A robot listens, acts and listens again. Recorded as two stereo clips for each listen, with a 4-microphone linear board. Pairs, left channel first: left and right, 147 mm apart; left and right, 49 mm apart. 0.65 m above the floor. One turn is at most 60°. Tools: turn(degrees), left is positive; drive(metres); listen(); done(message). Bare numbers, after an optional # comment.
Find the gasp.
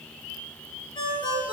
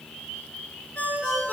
listen()
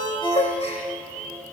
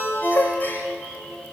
# The gasp: about 45° left or 135° left.
turn(45)
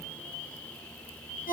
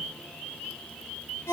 listen()
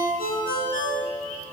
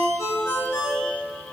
done("I heard a gasp, but can't make it out now. It was about straight ahead or 90° left.")